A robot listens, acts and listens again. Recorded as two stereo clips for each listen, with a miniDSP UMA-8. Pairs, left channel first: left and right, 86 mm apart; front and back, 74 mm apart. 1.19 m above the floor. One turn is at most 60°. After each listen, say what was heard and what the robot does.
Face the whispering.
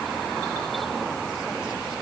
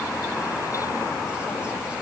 Keep listening.
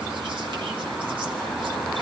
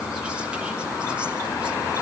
Keep listening.
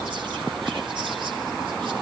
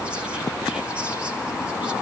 I can't make out whispering to turn to.